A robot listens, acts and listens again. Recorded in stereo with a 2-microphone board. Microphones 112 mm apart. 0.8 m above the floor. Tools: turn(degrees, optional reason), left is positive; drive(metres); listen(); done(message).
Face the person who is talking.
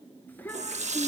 turn(degrees=30)
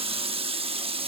listen()
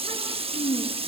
turn(degrees=145, reason="So it is at 145° left.")
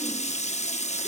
listen()
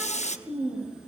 done("Found it: a child speaking, straight ahead.")